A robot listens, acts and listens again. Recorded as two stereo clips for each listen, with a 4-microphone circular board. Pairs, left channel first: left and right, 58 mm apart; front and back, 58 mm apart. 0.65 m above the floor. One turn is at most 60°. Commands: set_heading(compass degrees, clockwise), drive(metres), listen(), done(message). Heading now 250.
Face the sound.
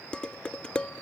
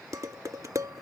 set_heading(190)
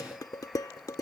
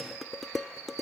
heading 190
set_heading(130)
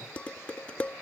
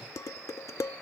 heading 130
set_heading(105)
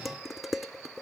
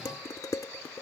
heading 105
done("Facing the dishes clattering.")